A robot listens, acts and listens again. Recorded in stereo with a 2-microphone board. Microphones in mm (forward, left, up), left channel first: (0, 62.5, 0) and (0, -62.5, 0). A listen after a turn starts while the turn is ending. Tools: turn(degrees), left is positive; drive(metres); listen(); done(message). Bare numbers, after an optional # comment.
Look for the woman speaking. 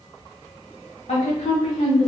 # The woman speaking: about 70° left or 110° left.
turn(70)
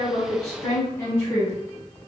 # So it is at 25° left.
turn(25)
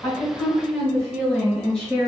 done("Facing the woman speaking, 2 to 4 m away.")